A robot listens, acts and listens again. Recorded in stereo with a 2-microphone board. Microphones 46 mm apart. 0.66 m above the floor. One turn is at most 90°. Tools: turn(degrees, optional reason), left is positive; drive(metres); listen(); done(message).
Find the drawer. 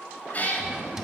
turn(degrees=-30)
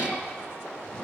listen()
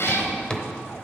turn(degrees=15, reason="So it is at 15° left.")
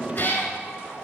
listen()
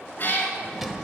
done("Found it: a drawer, straight ahead.")